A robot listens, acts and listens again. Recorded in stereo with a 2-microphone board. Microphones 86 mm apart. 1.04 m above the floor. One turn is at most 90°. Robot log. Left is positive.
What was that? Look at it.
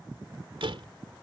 cmd yaw -90
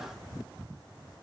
end: I heard a door slam from this way, but can't make it out now.